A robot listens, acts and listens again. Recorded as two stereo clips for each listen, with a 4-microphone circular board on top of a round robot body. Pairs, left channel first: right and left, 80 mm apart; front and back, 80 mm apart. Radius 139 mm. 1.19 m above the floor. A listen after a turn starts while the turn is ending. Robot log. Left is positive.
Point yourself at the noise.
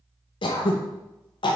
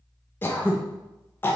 note: The throat clearing: 65° right.
cmd yaw -65
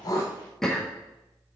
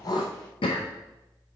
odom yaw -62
end: Facing the throat clearing.